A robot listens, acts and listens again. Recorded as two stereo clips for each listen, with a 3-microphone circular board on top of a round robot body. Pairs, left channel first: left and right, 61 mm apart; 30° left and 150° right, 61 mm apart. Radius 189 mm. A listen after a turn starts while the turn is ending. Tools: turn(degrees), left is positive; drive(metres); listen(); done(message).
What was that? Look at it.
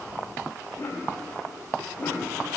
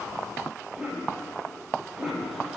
turn(degrees=140)
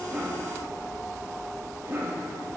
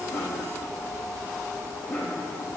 turn(degrees=-40)
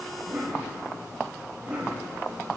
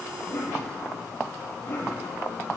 turn(degrees=-20)
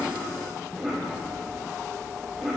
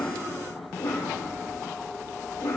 done("Facing the cough.")